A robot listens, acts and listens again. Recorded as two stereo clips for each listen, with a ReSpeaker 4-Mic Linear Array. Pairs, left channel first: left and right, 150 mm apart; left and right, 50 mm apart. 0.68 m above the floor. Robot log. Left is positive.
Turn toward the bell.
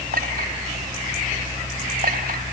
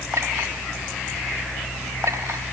cmd idle
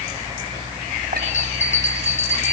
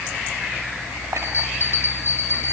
note: The bell: about 55° left or 125° left.
cmd yaw +55
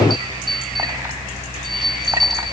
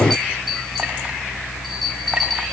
end: Found it: a bell, straight ahead, 2 to 4 m away.